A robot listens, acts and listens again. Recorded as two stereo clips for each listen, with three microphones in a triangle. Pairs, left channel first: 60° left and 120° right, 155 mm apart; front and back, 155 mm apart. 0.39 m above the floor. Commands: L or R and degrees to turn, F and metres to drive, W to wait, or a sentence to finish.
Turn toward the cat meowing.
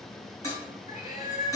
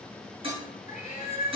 L40
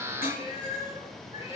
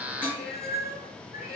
L10
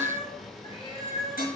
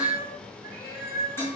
L10
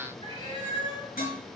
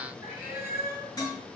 L10
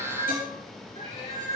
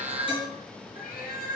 Facing the cat meowing.